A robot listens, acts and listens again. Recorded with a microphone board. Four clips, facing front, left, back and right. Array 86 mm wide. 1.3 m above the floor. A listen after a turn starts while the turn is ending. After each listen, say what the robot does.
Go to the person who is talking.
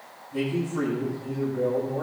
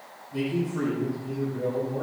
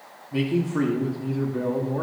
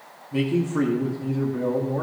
Turn 135° right.
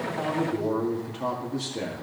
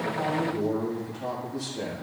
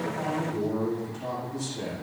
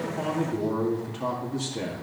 Turn 40° right.
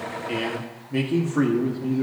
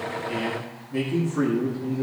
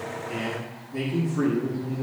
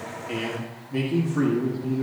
Drive 1.0 m forward.
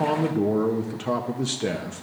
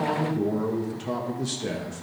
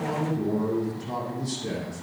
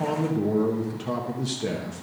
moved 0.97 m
Drive 1.0 m forward.
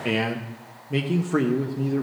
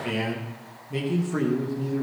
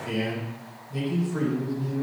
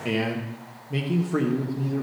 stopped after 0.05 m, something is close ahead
Turn 10° right.
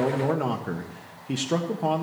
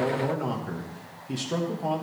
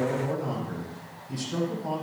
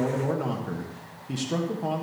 Arrived at the man speaking, straight ahead.